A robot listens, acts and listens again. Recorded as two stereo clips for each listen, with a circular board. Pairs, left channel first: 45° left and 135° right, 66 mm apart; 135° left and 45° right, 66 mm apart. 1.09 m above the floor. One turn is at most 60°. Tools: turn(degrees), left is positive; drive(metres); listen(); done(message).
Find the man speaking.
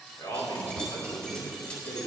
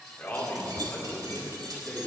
turn(degrees=60)
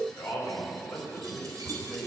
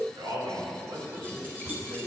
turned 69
turn(degrees=-25)
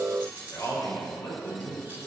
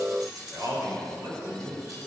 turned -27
done("Found it: a man speaking, straight ahead, 2 to 4 m away.")